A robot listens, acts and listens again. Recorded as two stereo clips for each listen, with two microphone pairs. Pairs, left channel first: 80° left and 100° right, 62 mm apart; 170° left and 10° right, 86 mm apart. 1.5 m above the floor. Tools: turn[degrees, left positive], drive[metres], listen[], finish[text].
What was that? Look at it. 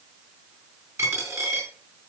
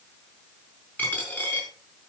Thought: The dropped coin: 125° right.
Action: turn[-125]
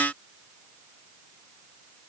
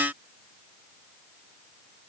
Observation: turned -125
Action: finish[Facing where the dropped coin came from. I can't hear it now.]